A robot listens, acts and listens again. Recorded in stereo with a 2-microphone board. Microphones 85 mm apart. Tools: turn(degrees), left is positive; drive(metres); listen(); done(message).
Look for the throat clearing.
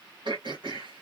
turn(degrees=-65)
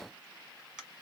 turn(degrees=-10)
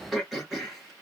done("Facing the throat clearing.")